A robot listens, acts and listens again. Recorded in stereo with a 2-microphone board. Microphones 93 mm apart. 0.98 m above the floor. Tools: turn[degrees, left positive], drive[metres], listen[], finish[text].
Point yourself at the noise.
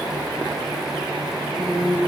Thought: The singing: about 25° right or 155° right.
Action: turn[-25]
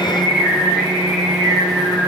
Action: finish[Found it: singing, straight ahead, over 4 m away.]